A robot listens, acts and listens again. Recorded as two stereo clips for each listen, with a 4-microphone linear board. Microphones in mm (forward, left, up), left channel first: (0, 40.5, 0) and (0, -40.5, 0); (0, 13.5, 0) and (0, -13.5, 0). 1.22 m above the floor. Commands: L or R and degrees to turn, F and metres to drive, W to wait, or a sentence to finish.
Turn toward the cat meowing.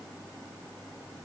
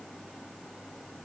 W
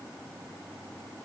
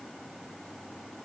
W
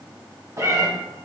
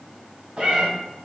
R40
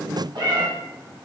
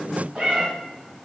R95
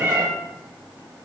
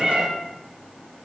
R35
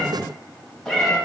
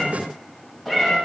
Facing the cat meowing, 1 to 2 m away.